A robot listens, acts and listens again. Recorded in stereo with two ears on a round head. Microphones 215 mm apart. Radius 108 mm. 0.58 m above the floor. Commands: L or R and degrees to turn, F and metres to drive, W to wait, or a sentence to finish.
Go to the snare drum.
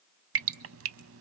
W
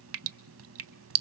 W
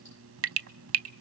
I can't make out a snare drum, only dripping.